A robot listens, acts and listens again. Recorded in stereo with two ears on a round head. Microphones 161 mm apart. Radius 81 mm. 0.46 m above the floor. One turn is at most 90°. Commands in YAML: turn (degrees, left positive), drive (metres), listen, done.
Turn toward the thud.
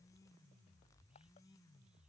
listen: true
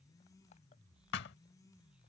turn: 60
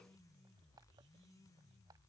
listen: true
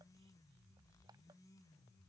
done: "I heard a thud, but can't make it out now. It was about straight ahead or 60° left."